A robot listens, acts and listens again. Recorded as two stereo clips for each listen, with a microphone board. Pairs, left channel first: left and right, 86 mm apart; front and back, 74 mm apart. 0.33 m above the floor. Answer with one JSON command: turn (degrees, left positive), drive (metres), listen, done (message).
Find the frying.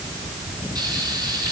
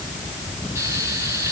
{"turn": -125}
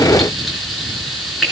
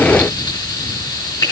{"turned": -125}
{"done": "Facing the frying."}